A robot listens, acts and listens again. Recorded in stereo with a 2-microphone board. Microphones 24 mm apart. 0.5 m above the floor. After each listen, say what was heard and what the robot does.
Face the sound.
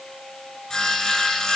The sawing: about 25° left or 155° left. Turn 25° left.
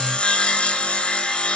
So it is at 135° left. Turn 135° left.
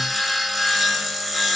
Facing the sawing.